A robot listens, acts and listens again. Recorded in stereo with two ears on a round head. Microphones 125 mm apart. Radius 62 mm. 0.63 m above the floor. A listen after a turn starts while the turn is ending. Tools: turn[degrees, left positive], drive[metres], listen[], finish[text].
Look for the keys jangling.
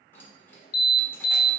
Thought: The keys jangling: about 15° left or 165° left.
Action: turn[15]
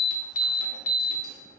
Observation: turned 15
Action: listen[]
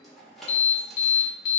Action: finish[Found it: keys jangling, straight ahead, 1 to 2 m away.]